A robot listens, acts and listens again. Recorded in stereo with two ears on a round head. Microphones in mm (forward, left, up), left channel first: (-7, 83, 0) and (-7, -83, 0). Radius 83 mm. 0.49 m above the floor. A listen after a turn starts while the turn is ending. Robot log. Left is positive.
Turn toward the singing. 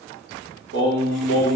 cmd yaw -90
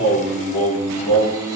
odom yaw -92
end: Facing the singing.